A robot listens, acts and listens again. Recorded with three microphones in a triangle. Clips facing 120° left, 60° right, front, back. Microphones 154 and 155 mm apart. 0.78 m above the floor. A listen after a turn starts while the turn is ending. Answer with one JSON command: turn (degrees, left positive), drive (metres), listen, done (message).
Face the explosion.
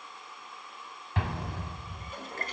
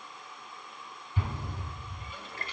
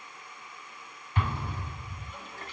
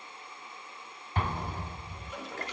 {"turn": 130}
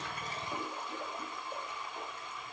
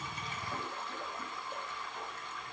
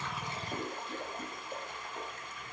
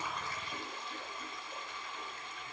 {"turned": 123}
{"done": "I heard an explosion from this way, but can't make it out now."}